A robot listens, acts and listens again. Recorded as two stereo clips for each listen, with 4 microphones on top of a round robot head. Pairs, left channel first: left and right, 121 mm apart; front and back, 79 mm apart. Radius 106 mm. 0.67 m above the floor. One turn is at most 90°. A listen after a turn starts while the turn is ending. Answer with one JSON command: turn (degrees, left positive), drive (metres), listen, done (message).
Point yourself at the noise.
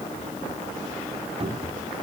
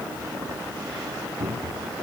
{"turn": -90}
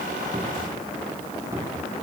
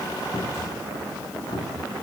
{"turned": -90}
{"turn": -25}
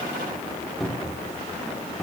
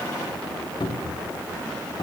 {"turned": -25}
{"done": "Found it: a cupboard door, straight ahead."}